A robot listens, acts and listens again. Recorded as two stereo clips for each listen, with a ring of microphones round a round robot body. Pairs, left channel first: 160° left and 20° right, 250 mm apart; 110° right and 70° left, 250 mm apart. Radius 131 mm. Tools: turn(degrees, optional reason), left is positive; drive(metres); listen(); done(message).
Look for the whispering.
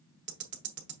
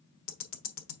listen()
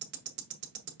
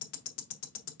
listen()
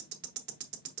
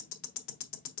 done("I can't make out whispering to turn to.")